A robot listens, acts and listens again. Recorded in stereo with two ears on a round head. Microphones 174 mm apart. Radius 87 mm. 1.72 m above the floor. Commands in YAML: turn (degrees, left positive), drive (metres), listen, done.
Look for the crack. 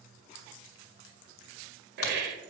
turn: 90
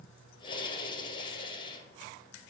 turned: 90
done: "Facing where the crack came from. I can't hear it now."